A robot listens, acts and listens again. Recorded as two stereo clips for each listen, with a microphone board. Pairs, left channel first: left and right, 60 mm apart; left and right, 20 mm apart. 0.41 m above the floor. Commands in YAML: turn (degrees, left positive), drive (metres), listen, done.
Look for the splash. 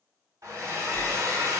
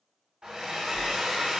turn: 30
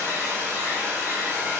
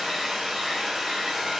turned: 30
listen: true
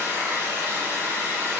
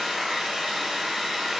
done: "I heard a splash, but can't make it out now. It was about 30° right or 150° left."